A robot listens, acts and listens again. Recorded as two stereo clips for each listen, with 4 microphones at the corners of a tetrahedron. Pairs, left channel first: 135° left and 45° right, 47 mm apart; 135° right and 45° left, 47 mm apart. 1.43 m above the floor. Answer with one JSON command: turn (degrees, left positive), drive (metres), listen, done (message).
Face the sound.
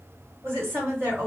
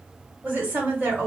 {"turn": -10}
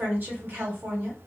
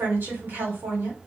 {"done": "Found it: a woman speaking, straight ahead."}